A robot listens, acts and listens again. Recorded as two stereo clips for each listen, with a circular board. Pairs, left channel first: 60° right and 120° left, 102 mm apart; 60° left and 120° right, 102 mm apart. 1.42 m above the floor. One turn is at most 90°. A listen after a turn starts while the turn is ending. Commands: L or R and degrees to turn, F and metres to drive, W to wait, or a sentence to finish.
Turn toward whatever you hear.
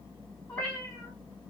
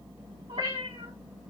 R90
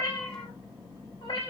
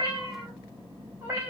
R45
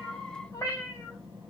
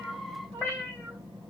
Found it: a cat meowing, straight ahead.